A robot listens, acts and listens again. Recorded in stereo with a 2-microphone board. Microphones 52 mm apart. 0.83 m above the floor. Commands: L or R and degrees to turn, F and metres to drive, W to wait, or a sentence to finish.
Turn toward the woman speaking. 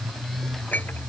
W
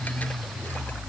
W
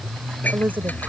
R40
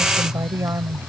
R100
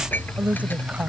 R30
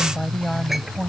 L20
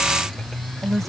Found it: a woman speaking, straight ahead.